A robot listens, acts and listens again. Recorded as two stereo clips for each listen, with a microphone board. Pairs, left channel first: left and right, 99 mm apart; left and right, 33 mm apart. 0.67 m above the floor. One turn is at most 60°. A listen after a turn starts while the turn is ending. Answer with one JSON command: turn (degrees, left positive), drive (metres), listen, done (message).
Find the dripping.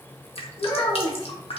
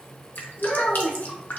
{"turn": 60}
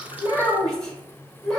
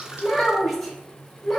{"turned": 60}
{"turn": 30}
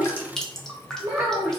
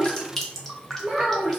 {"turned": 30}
{"done": "Found it: dripping, straight ahead."}